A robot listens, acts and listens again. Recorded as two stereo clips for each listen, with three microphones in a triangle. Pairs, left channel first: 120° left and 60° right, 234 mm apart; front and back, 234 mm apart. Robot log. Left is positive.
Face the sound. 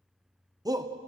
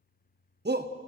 note: The shout: 135° right.
cmd yaw -135
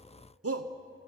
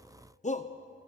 note: The shout is now 60° right.
cmd yaw -60
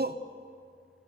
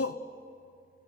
note: The shout is now 10° right.
cmd yaw -10
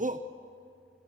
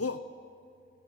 end: Facing the shout.